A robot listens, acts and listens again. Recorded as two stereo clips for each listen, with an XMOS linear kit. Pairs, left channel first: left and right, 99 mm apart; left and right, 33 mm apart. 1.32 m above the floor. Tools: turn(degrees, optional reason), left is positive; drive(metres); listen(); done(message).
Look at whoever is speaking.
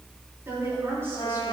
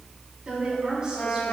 turn(degrees=-30, reason="The woman speaking: about 30° right or 150° right.")
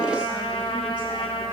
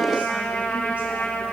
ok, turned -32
listen()
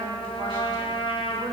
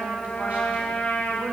listen()
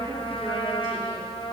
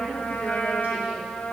done("I heard a woman speaking, but can't make it out now. It was about 5° left or 120° right.")